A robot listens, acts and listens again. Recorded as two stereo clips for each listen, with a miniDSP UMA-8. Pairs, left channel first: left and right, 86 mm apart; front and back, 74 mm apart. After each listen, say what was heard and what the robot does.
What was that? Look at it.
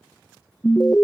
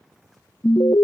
The alarm: 15° left. Turn 15° left.
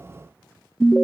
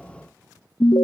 Facing the alarm.